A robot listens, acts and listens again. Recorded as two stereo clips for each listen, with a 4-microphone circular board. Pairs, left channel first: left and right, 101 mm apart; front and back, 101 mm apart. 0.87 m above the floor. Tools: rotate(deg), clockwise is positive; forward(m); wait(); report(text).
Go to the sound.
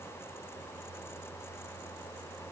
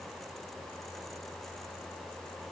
wait()
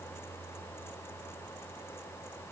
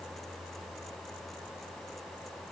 wait()
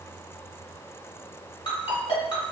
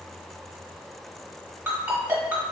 rotate(-110)
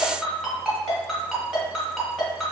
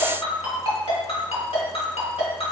forward(1.0)
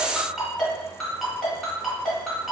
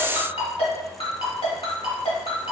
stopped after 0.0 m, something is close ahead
report("Something is in my way. I am facing the ringtone but have not reached it.")